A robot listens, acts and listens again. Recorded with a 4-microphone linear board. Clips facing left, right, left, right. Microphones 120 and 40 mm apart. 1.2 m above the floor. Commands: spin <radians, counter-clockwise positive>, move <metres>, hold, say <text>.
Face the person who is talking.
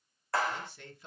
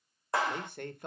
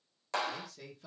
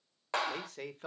spin -0.96
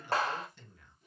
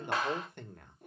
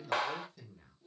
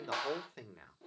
spin -1.13
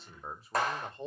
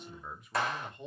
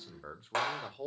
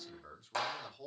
spin 0.61
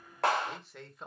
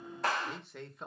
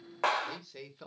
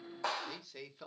say Facing the man speaking, 1 to 2 m away.